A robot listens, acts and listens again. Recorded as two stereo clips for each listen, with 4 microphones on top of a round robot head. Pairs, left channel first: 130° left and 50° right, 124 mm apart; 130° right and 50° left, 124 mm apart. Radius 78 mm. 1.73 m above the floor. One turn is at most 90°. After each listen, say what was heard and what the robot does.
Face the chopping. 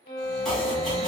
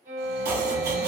The chopping: 40° left. Turn 40° left.
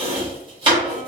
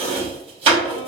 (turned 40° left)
Found it: chopping, straight ahead.